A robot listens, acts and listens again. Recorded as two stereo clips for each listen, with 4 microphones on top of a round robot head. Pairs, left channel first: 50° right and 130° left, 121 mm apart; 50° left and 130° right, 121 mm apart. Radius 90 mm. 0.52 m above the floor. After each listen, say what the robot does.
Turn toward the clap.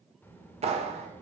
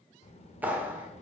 Turn 155° left.
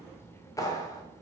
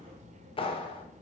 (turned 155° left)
Turn 10° left.
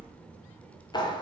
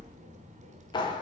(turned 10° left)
Found it: a clap, straight ahead, 1 to 2 m away.